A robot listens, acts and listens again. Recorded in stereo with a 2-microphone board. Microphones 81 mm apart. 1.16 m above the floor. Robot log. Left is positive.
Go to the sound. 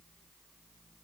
cmd idle
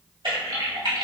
cmd yaw -90
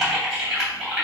cmd fwd 1.0
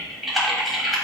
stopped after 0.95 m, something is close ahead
end: I am next to the typing on a keyboard.